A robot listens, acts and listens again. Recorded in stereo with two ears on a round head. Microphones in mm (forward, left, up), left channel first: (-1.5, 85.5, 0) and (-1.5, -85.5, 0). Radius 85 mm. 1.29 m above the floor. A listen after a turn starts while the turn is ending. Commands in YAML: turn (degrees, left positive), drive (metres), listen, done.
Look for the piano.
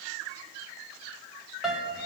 turn: -30
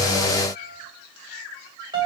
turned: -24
turn: -150
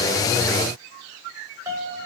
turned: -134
turn: -20
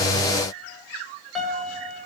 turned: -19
done: "Found it: a piano, straight ahead."